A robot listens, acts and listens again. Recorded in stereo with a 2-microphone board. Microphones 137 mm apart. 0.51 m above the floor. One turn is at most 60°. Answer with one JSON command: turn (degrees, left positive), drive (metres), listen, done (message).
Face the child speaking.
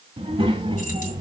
{"turn": -35}
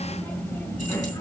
{"turn": 25}
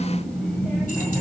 {"turn": 15}
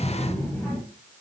{"turn": 10}
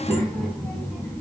{"turn": 15}
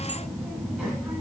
{"done": "Facing the child speaking."}